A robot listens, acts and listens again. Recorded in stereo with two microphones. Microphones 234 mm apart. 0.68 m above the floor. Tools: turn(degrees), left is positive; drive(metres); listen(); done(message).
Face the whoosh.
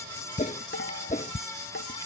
turn(degrees=30)
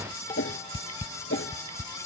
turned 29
turn(degrees=120)
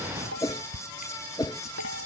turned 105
turn(degrees=15)
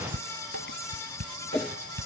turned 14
done("Found it: a whoosh, straight ahead.")